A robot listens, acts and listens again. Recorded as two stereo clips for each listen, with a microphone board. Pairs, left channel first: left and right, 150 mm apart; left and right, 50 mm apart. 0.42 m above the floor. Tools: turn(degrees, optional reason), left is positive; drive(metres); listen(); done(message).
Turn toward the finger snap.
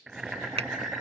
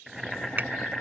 turn(degrees=-40, reason="The finger snap: about 40° right or 140° right.")
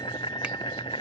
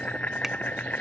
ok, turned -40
listen()
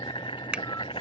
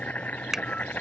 turn(degrees=-10, reason="So it is at 10° right.")
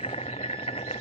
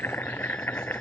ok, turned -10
listen()
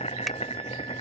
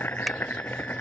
listen()
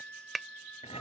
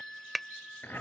done("Found it: a finger snap, straight ahead.")